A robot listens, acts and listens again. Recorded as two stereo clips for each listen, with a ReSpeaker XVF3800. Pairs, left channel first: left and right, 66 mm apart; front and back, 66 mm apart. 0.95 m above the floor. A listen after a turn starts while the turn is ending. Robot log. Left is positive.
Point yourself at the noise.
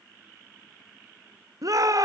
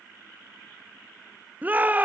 note: The shout: 115° right.
cmd yaw -115
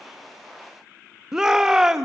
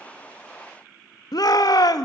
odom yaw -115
note: The shout is now 10° right.
cmd yaw -10
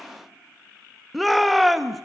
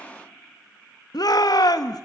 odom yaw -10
end: Found it: a shout, straight ahead.